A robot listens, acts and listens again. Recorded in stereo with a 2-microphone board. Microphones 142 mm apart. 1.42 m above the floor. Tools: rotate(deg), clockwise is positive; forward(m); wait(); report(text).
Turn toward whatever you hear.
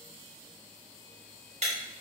rotate(50)
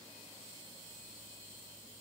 wait()
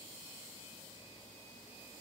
report("I heard breaking glass, but can't make it out now. It was about straight ahead or 80° right.")